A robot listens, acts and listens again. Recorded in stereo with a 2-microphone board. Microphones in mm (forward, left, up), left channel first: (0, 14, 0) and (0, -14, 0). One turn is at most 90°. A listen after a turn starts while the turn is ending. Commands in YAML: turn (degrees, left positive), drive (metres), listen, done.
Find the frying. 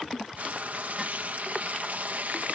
turn: -70
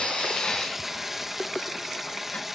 turn: -10
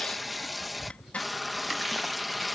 done: "Facing the frying."